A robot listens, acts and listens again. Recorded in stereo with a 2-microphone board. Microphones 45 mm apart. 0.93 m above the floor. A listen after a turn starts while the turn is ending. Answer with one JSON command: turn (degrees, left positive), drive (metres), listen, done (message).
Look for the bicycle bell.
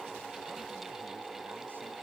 {"listen": true}
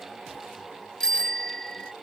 {"turn": 30}
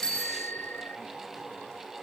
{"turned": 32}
{"turn": 135}
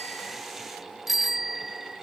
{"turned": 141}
{"done": "Found it: a bicycle bell, straight ahead."}